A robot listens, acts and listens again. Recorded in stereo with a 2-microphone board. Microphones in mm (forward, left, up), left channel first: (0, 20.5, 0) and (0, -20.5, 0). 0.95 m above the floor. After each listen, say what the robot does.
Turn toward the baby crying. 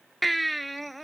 Turn 30° left.
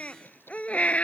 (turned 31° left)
Turn 150° left.
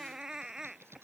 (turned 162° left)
Turn 10° right.
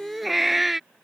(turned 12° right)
Found it: a baby crying, straight ahead.